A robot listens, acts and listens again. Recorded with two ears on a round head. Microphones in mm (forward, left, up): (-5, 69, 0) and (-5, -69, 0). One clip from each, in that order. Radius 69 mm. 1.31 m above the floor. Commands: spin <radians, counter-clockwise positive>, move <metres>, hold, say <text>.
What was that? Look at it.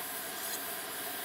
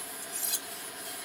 spin -0.96
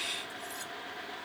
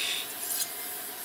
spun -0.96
spin -1.13
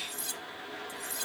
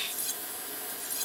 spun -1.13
say Found it: cutlery clinking, straight ahead.